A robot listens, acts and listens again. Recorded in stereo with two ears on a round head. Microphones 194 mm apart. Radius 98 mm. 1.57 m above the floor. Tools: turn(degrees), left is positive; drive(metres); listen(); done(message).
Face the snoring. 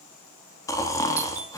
turn(degrees=15)
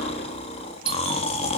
turn(degrees=150)
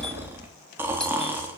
turn(degrees=-10)
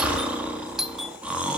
done("Found it: snoring, straight ahead.")